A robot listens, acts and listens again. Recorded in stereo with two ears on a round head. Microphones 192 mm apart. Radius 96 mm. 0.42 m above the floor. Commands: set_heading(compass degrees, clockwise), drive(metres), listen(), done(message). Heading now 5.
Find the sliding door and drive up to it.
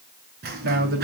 set_heading(55)
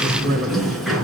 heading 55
drive(1.0)
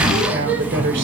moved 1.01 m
set_heading(65)
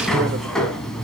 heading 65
drive(1.0)
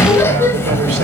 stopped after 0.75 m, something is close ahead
set_heading(55)
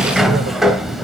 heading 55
done("I am next to the sliding door.")